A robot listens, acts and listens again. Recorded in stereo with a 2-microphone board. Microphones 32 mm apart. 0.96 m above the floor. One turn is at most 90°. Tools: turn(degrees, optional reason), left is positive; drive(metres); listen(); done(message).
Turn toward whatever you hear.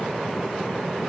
listen()
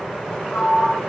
turn(degrees=65, reason="The sliding door: about 65° left or 115° left.")
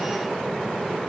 listen()
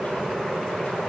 listen()
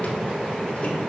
done("I heard a sliding door, but can't make it out now. It was about straight ahead or 50° left.")